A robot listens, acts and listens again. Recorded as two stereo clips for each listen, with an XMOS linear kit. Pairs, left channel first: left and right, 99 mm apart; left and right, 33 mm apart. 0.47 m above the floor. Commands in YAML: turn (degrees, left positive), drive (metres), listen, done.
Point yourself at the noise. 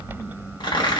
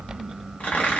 turn: 55
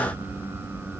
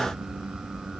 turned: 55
listen: true
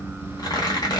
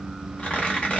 turn: 55
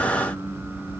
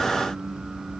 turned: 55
listen: true
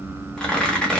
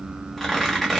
turn: 10
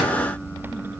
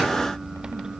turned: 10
listen: true
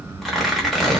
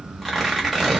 done: "Found it: tearing paper, straight ahead, under 1 m away."